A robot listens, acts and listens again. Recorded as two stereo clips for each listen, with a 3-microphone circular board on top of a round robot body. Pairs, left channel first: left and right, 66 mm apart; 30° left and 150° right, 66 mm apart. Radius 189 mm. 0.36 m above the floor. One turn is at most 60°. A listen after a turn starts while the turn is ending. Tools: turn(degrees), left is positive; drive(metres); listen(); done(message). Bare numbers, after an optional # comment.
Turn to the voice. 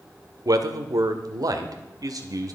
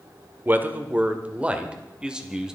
# The man speaking: 70° right.
turn(-60)
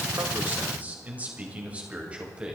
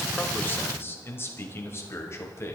# The man speaking is now 15° right.
turn(-15)
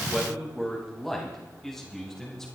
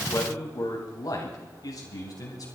done("Found it: a man speaking, straight ahead.")